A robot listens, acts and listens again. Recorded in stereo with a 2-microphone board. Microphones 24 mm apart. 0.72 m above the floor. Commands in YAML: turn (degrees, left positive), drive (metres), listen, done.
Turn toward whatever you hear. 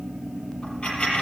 turn: 40
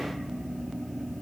listen: true
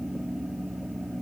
done: "I heard a dropped coin, but can't make it out now. It was about straight ahead or 100° left."